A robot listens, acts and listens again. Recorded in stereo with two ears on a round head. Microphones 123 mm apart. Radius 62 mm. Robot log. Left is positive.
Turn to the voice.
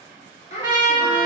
note: The child speaking: about 50° left or 130° left.
cmd yaw +50
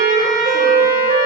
cmd idle
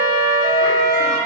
cmd idle
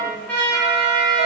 end: I heard a child speaking, but can't make it out now. It was about straight ahead or 80° left.